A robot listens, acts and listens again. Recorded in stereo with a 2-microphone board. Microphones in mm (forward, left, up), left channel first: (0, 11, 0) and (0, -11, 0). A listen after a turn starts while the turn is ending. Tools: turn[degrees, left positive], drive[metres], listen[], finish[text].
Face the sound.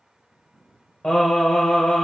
Thought: The singing: about 55° left or 125° left.
Action: turn[55]
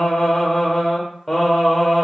Action: finish[Facing the singing, 1 to 2 m away.]